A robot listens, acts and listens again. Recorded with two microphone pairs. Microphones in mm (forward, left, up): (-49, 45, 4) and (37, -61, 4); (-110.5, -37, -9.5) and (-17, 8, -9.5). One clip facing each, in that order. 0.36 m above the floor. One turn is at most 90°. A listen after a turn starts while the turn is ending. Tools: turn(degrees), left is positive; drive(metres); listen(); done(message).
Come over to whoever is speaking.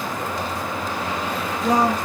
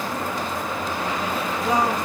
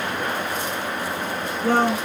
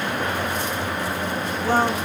turn(degrees=90)
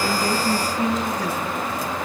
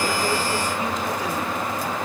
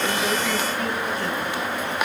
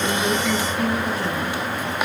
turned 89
turn(degrees=90)
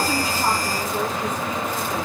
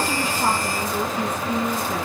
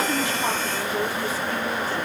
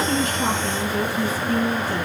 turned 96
turn(degrees=-10)
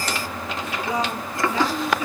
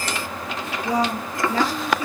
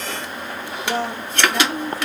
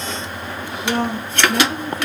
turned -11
drive(metres=1.0)
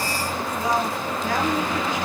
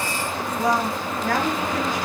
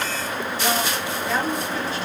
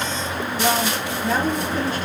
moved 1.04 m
drive(metres=1.0)
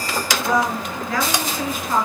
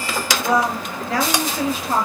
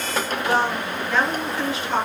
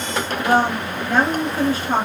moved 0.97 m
drive(metres=1.0)
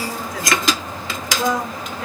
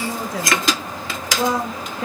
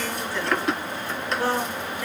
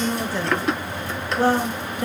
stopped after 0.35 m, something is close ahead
turn(degrees=-10)
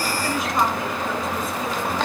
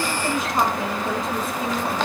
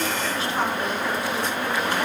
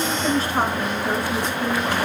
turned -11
done("I am next to the woman speaking.")